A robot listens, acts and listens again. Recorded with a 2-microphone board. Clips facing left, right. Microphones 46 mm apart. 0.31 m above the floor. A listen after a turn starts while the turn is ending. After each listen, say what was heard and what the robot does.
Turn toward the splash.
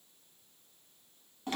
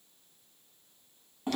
Keep listening.
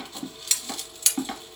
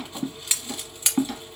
Keep listening.
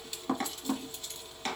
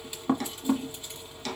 I can't make out a splash to turn to.